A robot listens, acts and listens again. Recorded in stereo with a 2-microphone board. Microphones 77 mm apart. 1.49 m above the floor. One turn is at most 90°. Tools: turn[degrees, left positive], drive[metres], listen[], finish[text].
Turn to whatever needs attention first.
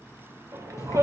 Thought: The shout: about 45° right or 135° right.
Action: turn[-45]
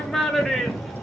Action: finish[Found it: a shout, straight ahead.]